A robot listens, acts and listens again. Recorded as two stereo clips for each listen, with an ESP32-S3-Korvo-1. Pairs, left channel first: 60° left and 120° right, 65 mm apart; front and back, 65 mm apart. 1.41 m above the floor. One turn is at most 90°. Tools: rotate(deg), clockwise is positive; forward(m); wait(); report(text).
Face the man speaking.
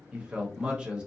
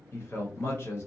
rotate(45)
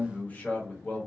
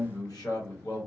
report("Found it: a man speaking, straight ahead.")